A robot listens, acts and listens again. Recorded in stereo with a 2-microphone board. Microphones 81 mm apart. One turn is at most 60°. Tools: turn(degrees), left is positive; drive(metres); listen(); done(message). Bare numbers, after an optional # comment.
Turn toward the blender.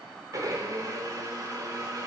# The blender: about 45° right or 135° right.
turn(-45)
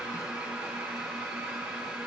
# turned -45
# So it is at 10° right.
turn(-10)
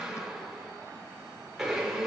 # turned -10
done("Found it: a blender, straight ahead.")